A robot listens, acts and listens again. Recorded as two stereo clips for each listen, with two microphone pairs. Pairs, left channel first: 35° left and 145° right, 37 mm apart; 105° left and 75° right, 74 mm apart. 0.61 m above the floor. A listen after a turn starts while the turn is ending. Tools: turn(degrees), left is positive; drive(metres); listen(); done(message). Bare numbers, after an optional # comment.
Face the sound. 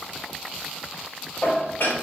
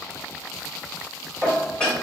# The dishes clattering: 30° left.
turn(30)
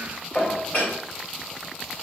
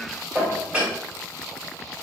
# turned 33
done("Facing the dishes clattering.")